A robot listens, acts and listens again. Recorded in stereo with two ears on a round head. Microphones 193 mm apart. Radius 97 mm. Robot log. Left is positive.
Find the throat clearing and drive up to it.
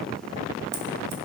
cmd idle
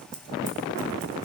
cmd idle
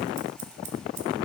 end: I can't make out throat clearing to turn to.